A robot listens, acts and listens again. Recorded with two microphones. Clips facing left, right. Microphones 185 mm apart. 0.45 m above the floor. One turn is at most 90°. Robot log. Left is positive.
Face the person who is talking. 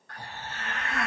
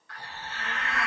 note: The child speaking: about 20° right or 160° right.
cmd yaw -20
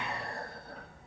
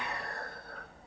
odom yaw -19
note: So it is at 145° right.
cmd yaw -90
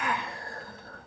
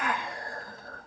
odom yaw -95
note: The child speaking is now 45° right.
cmd yaw -45
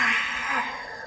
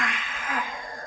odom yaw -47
end: Found it: a child speaking, straight ahead, 1 to 2 m away.